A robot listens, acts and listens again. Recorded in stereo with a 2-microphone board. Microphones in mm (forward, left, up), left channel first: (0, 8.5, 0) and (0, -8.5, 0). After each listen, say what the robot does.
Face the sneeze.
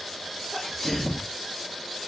Turn 30° left.
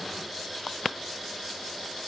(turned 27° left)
Keep listening.
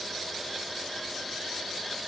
I heard a sneeze, but can't make it out now. It was about 5° left or 120° left.